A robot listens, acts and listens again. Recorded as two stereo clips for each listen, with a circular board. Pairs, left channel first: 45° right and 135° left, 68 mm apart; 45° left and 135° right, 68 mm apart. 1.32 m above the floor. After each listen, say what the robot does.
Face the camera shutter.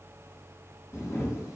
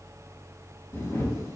Found it: a camera shutter, straight ahead.